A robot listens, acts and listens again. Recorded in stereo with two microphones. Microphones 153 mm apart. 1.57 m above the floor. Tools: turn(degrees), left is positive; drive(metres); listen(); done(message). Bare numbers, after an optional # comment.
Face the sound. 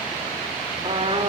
# The trumpet: about 35° right or 145° right.
turn(-35)
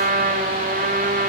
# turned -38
# So it is at 105° right.
turn(-105)
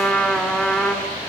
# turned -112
done("Facing the trumpet.")